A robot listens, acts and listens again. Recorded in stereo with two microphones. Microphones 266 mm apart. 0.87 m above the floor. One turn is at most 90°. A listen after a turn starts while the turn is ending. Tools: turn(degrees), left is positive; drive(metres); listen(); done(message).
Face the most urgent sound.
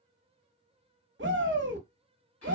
turn(degrees=-45)
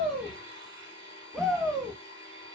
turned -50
done("Found it: a shout, straight ahead.")